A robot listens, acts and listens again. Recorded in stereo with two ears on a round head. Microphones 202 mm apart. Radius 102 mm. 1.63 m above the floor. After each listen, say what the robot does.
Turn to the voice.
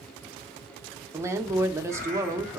Turn 30° right.
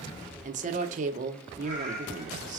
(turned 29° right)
Turn 135° right.
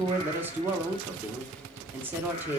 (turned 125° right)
Turn 10° right.
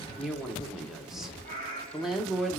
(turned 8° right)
Facing the woman speaking.